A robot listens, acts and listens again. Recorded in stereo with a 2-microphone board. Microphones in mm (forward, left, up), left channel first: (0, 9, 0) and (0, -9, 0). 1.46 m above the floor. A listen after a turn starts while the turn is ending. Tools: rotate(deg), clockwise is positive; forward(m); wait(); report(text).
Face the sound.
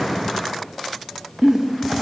rotate(50)
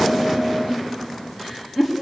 report("Found it: a giggle, straight ahead, 2 to 4 m away.")